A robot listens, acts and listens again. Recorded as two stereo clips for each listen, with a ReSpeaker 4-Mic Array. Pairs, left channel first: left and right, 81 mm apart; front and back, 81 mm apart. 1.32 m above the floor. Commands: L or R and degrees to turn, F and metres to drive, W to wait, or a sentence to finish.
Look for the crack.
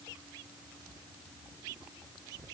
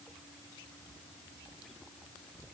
W
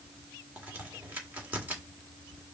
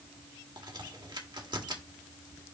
R160
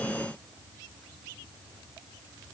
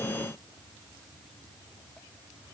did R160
Facing where the crack came from. I can't hear it now.